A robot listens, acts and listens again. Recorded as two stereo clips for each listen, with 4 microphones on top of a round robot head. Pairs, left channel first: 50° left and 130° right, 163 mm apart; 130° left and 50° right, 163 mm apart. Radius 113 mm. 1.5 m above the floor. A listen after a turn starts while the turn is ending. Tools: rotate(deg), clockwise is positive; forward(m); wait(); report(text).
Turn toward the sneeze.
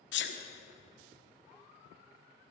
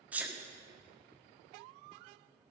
rotate(-35)
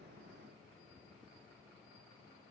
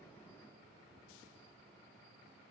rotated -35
report("Facing where the sneeze came from. I can't hear it now.")